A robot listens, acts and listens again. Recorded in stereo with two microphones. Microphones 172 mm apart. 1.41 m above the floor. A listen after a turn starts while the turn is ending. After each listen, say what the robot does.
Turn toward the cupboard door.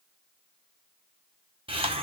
Keep listening.
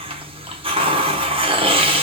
Keep listening.
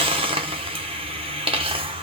I can't make out a cupboard door to turn to.